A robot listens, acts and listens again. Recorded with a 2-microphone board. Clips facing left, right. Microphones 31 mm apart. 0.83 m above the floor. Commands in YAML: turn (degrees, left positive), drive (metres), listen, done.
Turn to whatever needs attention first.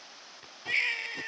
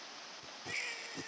turn: 50
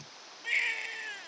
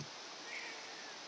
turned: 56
turn: 75
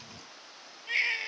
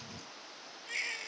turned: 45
turn: 30
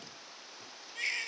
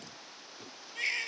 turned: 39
turn: -10
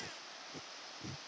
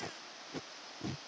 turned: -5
listen: true
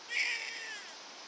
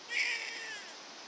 done: "Found it: a baby crying, straight ahead."